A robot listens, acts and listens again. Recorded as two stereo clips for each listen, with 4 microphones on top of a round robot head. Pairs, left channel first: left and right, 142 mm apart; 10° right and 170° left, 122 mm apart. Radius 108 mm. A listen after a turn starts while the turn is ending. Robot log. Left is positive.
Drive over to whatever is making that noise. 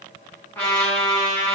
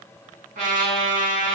note: The trumpet: 165° left.
cmd yaw +165
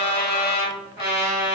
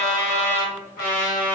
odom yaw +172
cmd fwd 1.0
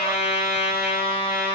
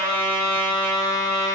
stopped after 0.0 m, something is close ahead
end: Something is in my way. I am facing the trumpet but have not reached it.